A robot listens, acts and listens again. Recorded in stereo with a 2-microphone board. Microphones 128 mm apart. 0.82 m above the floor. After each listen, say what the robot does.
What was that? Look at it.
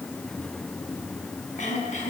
Turn 70° left.
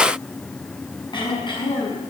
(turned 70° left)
Turn 35° left.
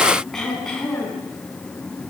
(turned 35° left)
Facing the throat clearing.